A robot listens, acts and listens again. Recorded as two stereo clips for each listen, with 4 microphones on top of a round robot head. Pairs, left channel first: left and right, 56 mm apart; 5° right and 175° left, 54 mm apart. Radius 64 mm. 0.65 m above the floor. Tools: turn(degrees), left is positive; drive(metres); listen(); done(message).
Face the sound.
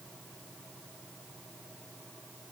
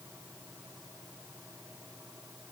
listen()
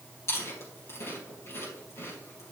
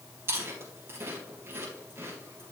turn(degrees=130)
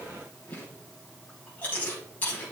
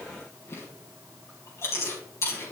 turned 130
turn(degrees=25)
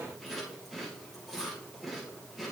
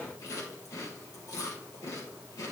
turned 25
done("Facing the chewing.")